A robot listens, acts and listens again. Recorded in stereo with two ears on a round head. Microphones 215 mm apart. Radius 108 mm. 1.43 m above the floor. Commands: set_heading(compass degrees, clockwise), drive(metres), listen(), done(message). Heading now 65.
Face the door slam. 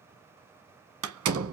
set_heading(125)
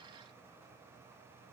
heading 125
listen()
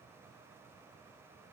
done("I heard a door slam, but can't make it out now. It was about straight ahead or 60° right.")